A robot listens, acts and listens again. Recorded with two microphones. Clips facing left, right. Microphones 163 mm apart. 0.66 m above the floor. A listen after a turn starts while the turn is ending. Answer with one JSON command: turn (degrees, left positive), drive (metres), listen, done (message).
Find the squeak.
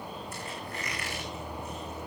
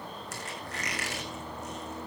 {"turn": -90}
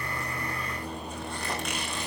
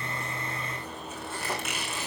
{"done": "Facing the squeak, over 4 m away."}